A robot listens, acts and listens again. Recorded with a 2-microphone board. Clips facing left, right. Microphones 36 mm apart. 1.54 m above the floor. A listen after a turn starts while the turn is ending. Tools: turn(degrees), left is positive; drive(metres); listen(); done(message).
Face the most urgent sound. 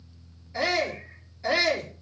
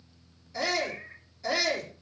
turn(degrees=25)
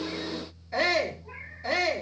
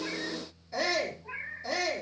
turn(degrees=130)
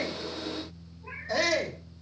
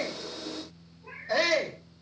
turn(degrees=-20)
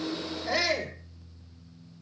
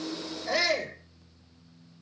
done("Found it: a shout, straight ahead.")